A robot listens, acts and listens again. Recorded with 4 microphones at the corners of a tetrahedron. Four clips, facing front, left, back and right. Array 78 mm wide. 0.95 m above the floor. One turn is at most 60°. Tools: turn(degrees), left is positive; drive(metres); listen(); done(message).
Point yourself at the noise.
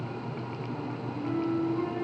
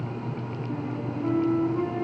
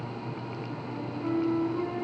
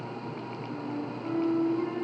turn(degrees=60)
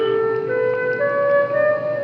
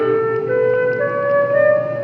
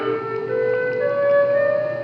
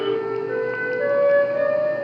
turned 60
turn(degrees=60)
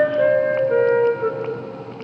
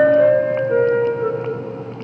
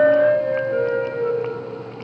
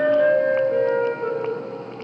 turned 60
turn(degrees=25)
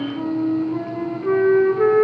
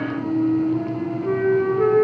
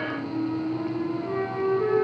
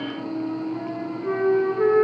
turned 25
turn(degrees=-10)
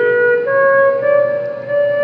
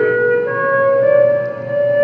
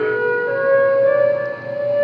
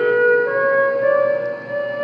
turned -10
done("Found it: a flute, straight ahead.")